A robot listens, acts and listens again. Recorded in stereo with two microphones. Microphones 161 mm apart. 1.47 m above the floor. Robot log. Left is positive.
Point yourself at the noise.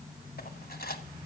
note: The cutlery clinking: about 70° left or 110° left.
cmd yaw +70
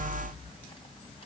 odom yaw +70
cmd idle
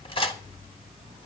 note: So it is at 35° left.
cmd yaw +35
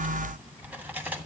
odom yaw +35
note: The cutlery clinking is now 10° right.
cmd yaw -10
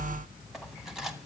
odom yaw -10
end: Found it: cutlery clinking, straight ahead.